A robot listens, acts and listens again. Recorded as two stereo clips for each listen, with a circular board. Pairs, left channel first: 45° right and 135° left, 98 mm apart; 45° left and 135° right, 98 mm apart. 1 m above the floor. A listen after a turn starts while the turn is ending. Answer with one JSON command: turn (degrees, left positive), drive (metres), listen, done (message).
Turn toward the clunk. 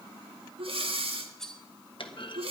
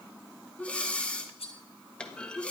{"turn": -35}
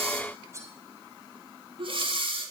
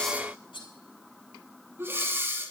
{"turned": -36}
{"done": "I heard a clunk from this way, but can't make it out now."}